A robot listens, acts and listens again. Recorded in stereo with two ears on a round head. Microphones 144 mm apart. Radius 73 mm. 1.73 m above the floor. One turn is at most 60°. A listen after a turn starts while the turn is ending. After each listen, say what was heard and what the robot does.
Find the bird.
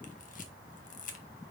Keep listening.
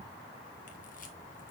Keep listening.
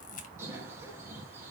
The bird: about 15° right or 165° right. Turn 15° right.
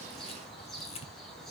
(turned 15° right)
Facing the bird, 2 to 4 m away.